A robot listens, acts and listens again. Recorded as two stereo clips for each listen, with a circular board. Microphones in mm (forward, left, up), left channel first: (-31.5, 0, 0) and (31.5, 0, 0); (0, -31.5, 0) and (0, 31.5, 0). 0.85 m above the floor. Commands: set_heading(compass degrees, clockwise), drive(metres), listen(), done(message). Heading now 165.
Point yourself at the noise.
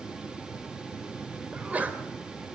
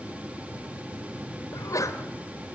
set_heading(230)
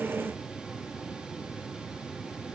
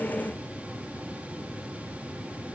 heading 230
done("I heard a sneeze from this way, but can't make it out now.")